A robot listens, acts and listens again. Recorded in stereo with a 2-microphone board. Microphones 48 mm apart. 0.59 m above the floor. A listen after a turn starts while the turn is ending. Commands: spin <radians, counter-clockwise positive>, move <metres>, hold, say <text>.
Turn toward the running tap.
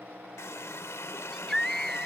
spin 1.57
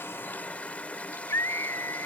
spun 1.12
spin 0.61
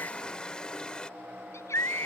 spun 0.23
spin 0.35
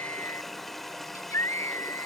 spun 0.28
say Facing the running tap.